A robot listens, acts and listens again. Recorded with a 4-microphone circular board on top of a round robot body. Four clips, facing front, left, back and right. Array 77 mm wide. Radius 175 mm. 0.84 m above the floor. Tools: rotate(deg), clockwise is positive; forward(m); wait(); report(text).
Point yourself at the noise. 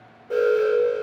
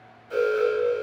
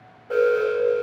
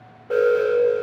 rotate(105)
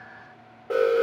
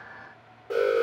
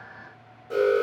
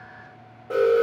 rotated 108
report("Found it: an alarm, straight ahead.")